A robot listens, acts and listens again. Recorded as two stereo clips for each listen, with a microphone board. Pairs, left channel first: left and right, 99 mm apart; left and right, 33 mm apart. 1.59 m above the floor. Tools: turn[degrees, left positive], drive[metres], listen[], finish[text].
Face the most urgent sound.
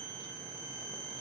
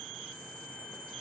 Action: listen[]
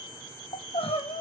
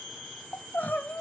Thought: The crying: about 70° left or 110° left.
Action: turn[70]
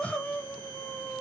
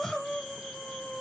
Thought: So it is at 15° left.
Action: turn[15]
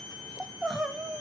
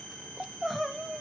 Action: finish[Found it: crying, straight ahead.]